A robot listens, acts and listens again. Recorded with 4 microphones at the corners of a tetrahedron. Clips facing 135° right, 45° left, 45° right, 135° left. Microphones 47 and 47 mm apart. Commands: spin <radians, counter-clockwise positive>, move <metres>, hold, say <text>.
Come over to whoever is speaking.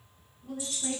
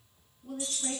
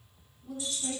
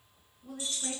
spin 2.27
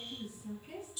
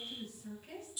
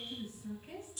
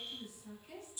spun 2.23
move 1.0
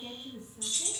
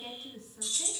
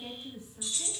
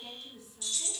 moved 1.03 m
spin 0.17
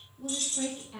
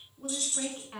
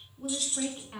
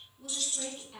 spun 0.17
move 1.0
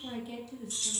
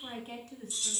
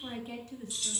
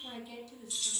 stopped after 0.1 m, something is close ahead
say I am next to the woman speaking.